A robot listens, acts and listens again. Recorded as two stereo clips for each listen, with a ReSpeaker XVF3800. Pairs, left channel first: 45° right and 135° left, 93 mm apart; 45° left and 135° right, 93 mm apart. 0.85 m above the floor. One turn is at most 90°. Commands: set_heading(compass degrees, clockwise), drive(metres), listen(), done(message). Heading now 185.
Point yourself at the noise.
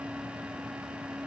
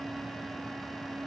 listen()
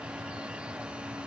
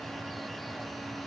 listen()
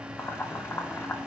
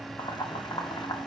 set_heading(165)
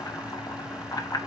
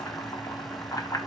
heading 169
done("Facing the boiling.")